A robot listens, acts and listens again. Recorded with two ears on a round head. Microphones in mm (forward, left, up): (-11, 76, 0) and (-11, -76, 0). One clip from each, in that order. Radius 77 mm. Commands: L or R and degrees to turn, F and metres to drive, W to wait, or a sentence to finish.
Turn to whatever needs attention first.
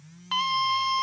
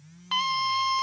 R15
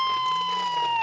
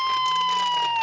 R150
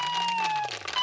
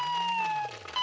Found it: a scream, straight ahead.